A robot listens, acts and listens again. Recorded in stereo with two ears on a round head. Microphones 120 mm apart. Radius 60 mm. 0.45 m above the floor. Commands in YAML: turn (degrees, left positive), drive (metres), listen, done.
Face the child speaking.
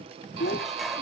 turn: 90
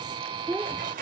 turn: -15
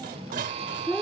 done: "Facing the child speaking."